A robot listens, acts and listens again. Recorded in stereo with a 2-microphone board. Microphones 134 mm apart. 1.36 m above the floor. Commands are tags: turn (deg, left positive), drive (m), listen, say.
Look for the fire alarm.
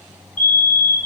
<turn deg="90"/>
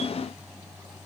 <listen/>
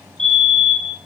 <say>Facing the fire alarm.</say>